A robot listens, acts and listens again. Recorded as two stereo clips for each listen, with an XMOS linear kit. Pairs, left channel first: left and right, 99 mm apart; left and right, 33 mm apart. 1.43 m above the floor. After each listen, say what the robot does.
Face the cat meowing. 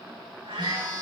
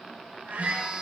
Turn 90° right.
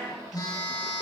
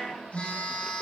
Keep listening.
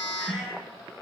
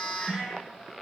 Facing the cat meowing, over 4 m away.